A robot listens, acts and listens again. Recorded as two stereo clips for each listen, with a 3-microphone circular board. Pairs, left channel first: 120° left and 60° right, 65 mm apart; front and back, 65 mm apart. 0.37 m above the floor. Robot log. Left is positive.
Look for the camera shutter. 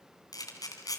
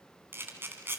note: The camera shutter: 125° left.
cmd yaw +125
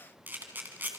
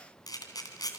end: Facing the camera shutter.